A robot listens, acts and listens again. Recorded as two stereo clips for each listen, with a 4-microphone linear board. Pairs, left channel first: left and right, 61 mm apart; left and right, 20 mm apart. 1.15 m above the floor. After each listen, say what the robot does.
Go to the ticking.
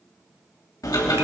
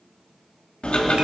Turn 90° left.
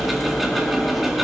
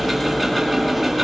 Drive 1.0 m forward.
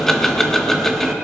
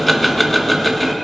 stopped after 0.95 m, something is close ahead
Arrived at the ticking, straight ahead.